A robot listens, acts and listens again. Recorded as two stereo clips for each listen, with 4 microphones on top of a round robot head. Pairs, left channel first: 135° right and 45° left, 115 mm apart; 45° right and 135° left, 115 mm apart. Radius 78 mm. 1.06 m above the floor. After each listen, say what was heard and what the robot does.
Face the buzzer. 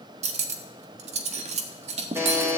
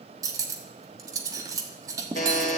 The buzzer: 30° right. Turn 30° right.
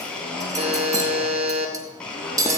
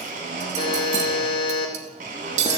Found it: a buzzer, straight ahead, 2 to 4 m away.